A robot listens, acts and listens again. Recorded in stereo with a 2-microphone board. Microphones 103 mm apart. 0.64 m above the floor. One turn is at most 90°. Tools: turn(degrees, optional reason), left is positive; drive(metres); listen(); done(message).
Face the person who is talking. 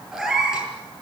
listen()
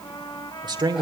turn(degrees=-50, reason="The man speaking: about 50° right or 130° right.")
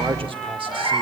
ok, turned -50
listen()
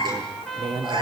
turn(degrees=-80, reason="So it is at 80° right.")
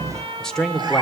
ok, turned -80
done("Found it: a man speaking, straight ahead.")